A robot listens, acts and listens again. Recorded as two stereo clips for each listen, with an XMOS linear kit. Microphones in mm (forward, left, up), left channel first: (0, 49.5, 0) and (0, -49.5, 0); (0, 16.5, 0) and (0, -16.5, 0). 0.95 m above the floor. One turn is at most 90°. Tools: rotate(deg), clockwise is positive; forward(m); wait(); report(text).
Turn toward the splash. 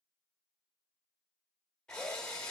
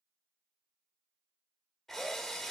wait()
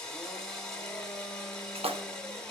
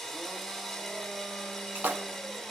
rotate(90)
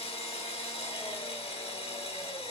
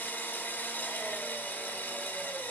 report("Facing where the splash came from. I can't hear it now.")